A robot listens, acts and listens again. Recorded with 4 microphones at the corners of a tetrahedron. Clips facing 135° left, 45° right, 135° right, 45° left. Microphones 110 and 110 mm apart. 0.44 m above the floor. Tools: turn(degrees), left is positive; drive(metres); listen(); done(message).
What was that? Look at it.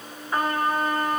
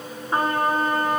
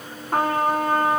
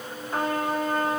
turn(degrees=-105)
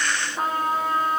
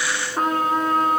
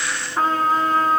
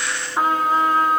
turn(degrees=-35)
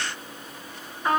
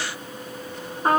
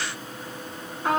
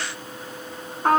done("Facing the trumpet, 1 to 2 m away.")